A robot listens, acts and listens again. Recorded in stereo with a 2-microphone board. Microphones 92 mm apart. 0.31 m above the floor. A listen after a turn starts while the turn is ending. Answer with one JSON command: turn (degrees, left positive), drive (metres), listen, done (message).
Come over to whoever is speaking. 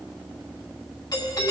{"listen": true}
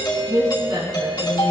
{"turn": -50}
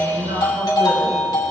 {"listen": true}
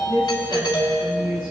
{"turn": -75}
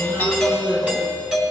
{"listen": true}
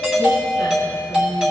{"listen": true}
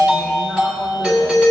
{"done": "Facing where the woman speaking came from. I can't hear it now. I did not reach it."}